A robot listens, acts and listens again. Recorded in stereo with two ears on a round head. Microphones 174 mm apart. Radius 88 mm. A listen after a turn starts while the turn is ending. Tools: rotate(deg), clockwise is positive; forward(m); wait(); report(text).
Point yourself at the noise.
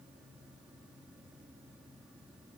wait()
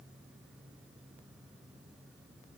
wait()
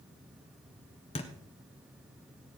rotate(-30)
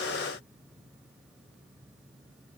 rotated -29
wait()
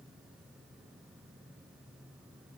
report("I heard a thud, but can't make it out now. It was about straight ahead or 120° left.")